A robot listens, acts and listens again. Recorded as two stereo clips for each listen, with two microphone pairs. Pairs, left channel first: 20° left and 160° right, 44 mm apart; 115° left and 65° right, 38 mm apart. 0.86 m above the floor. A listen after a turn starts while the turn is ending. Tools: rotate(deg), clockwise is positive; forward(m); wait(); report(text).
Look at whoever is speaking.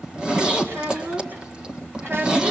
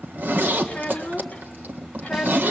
rotate(-175)
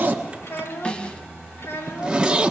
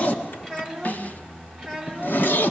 rotate(-30)
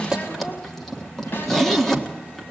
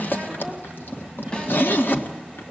wait()
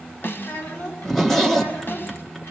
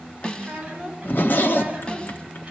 report("Found it: a child speaking, straight ahead.")